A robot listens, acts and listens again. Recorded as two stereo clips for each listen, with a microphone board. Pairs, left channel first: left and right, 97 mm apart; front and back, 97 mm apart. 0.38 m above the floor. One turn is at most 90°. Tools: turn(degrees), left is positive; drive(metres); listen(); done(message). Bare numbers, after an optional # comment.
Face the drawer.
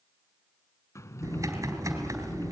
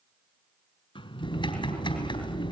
# The drawer: 30° left.
turn(30)
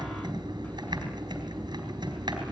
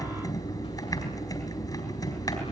listen()
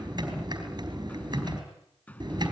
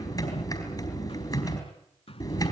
# The drawer is now 15° left.
turn(15)
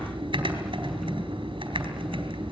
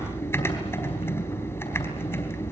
listen()
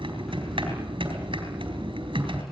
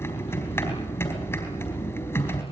done("Found it: a drawer, straight ahead.")